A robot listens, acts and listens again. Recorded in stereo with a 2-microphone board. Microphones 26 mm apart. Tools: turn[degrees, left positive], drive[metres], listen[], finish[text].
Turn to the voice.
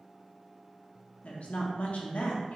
Thought: The woman speaking: about 65° left or 115° left.
Action: turn[65]
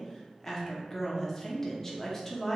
Thought: So it is at 25° left.
Action: turn[25]
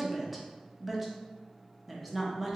Action: finish[Found it: a woman speaking, straight ahead.]